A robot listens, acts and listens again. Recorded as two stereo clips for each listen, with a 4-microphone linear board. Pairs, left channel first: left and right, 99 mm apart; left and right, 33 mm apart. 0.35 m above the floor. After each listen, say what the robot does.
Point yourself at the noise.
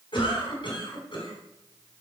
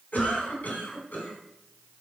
Turn 55° left.
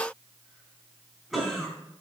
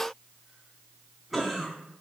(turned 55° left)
Found it: a cough, straight ahead, 2 to 4 m away.